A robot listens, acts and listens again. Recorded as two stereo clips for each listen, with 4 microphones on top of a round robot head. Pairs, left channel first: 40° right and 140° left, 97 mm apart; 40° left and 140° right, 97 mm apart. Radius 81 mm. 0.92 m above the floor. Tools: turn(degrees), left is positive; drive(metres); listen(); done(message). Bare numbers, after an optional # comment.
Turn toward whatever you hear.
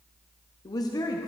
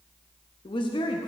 done("Found it: a woman speaking, straight ahead, under 1 m away.")